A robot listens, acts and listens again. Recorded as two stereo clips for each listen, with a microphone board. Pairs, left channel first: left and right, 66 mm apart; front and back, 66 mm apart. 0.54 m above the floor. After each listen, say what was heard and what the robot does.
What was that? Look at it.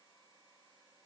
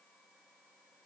Keep listening.
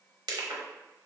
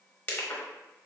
The crushing: 75° right. Turn 75° right.
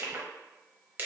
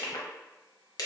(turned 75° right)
The crushing is now 25° right. Turn 25° right.
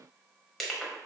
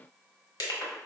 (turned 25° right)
Found it: crushing, straight ahead.